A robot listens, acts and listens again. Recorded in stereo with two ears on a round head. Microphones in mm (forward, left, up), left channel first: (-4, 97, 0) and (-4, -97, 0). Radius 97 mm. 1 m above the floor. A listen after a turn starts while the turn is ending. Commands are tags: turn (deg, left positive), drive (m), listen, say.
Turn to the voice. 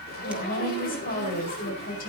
<turn deg="45"/>
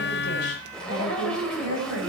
<turn deg="90"/>
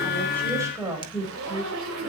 <turn deg="-15"/>
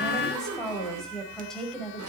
<say>Found it: a woman speaking, straight ahead, over 4 m away.</say>